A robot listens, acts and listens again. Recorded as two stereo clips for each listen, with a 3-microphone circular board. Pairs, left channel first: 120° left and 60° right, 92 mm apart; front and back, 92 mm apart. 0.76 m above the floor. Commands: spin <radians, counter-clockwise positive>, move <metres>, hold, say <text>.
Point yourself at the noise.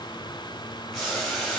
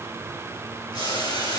spin 0.52
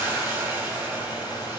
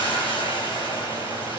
say Found it: boiling, straight ahead, 2 to 4 m away.